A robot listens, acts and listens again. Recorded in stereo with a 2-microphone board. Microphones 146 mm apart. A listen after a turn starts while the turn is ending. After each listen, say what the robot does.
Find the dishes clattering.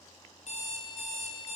Keep listening.
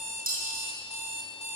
Turn 90° right.
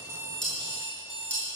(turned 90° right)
Turn 10° left.
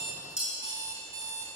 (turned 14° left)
Facing the dishes clattering.